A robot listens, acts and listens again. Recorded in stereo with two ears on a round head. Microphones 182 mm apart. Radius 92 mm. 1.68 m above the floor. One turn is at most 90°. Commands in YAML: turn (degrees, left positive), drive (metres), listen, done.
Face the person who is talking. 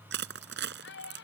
turn: 55
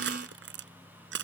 listen: true
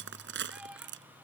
listen: true
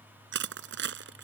done: "I heard a child speaking, but can't make it out now. It was about straight ahead or 70° left."